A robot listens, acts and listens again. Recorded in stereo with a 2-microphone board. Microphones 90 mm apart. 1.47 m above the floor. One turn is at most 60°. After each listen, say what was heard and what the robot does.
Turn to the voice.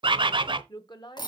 The woman speaking: about 50° left or 130° left. Turn 50° left.
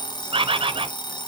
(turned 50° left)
Keep listening.
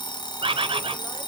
Keep listening.
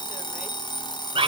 I heard a woman speaking, but can't make it out now. It was about straight ahead or 80° left.